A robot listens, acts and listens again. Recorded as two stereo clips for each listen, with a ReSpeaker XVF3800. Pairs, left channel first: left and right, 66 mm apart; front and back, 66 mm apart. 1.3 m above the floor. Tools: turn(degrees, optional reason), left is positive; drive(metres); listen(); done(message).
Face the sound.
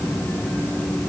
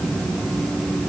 listen()
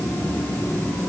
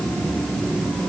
listen()
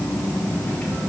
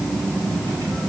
done("I can't make out anything to turn to.")